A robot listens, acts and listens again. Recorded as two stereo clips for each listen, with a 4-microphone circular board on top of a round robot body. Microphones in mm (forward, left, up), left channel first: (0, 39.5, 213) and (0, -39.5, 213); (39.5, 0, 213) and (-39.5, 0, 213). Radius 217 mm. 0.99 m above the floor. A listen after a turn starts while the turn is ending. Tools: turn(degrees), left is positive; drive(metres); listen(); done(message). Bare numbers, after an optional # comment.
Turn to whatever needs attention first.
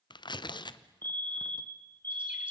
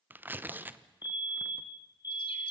# The fire alarm: 25° left.
turn(25)
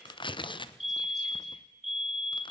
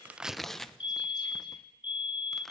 done("Found it: a fire alarm, straight ahead.")